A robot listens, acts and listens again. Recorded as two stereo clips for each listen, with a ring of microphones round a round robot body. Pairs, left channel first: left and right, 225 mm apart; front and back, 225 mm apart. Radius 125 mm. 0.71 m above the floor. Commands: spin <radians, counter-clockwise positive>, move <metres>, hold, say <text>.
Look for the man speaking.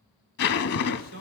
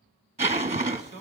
spin -2.09
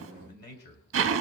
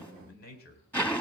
spin 0.79
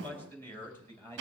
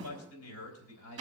spin 0.17
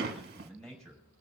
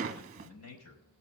say Facing the man speaking.